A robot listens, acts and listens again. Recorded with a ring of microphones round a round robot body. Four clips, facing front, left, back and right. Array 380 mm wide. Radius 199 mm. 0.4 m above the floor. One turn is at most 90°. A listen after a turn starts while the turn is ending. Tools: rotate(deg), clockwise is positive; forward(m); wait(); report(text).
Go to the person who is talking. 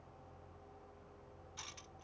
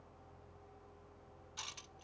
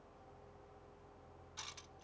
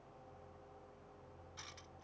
wait()
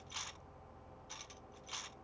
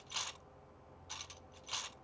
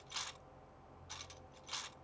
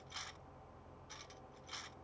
wait()
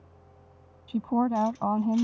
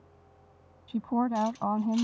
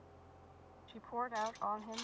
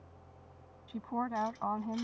rotate(-30)
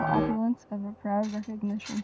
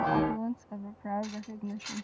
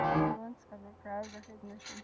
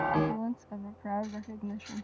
forward(1.0)
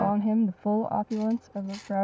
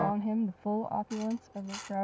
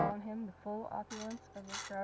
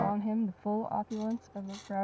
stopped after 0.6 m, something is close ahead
report("Something is in my way. I am facing the woman speaking but have not reached it.")